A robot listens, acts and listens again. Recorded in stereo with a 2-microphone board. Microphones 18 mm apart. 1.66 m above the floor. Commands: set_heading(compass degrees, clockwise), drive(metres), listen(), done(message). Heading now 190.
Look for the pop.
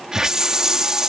listen()
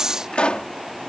set_heading(100)
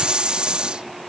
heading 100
done("Facing where the pop came from. I can't hear it now.")